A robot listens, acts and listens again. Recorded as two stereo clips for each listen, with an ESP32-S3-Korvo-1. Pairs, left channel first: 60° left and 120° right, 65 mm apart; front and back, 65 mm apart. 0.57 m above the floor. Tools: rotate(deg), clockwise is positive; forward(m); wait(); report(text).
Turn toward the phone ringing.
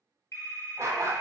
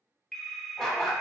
rotate(-80)
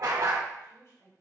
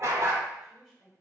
wait()
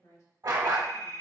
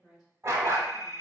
rotate(-30)
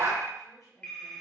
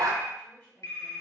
report("Found it: a phone ringing, straight ahead.")